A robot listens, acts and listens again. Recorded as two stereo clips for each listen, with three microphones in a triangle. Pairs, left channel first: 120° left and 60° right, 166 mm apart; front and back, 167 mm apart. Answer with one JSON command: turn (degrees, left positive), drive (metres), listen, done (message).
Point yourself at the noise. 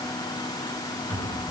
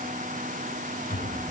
{"turn": 35}
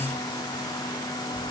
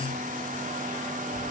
{"listen": true}
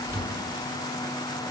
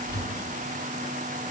{"turn": 15}
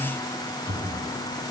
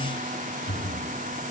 {"done": "Facing the cupboard door."}